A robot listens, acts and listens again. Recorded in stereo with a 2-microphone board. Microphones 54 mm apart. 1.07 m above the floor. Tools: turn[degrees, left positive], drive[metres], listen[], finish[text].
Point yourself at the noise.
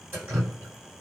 Thought: The dripping: about 30° right or 150° right.
Action: turn[-30]
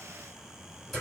Action: finish[Found it: dripping, straight ahead.]